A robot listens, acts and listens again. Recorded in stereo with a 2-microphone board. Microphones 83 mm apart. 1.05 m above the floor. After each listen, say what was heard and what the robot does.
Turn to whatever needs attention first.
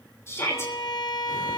The shout: about 30° left or 150° left. Turn 30° left.
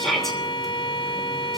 Facing the shout.